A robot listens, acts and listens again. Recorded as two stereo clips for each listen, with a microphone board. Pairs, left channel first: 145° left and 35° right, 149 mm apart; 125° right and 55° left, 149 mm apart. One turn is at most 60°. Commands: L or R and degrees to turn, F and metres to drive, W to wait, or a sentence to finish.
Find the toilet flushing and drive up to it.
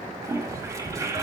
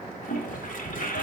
R60
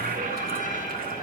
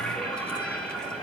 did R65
R40
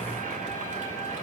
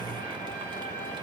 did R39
W
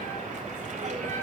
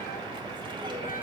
F1.0
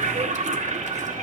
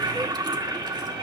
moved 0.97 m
F1.0
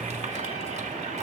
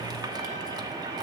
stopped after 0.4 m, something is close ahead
W
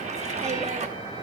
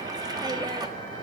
I am next to the toilet flushing.